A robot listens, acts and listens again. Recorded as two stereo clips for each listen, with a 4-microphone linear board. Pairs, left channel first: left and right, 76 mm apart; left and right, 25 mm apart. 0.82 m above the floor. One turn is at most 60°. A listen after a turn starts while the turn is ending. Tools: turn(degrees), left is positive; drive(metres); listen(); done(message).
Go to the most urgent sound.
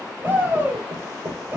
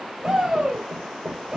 turn(degrees=-30)
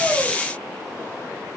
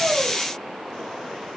listen()
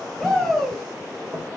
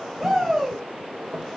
drive(metres=1.0)
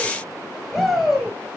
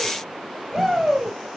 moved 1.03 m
drive(metres=1.0)
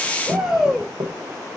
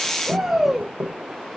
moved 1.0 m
turn(degrees=-10)
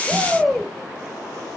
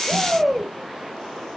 drive(metres=1.0)
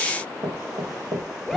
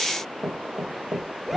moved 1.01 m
drive(metres=1.0)
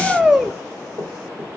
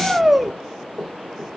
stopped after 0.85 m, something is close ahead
turn(degrees=-10)
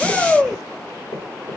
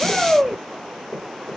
done("Arrived at the shout, straight ahead.")